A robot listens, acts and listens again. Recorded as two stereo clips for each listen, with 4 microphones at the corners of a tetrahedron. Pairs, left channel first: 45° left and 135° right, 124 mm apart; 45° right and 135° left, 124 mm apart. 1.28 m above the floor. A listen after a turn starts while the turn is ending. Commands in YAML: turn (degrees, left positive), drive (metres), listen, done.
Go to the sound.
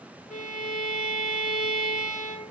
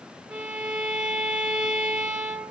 turn: 55
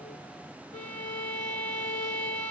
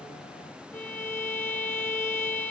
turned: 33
turn: 25
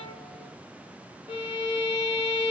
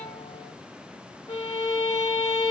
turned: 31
drive: 1.0
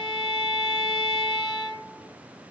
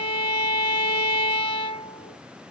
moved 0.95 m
turn: -10
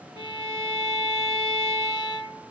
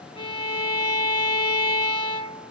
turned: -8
drive: 1.0
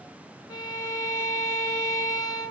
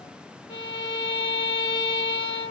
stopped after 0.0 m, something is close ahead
done: "I am next to the violin."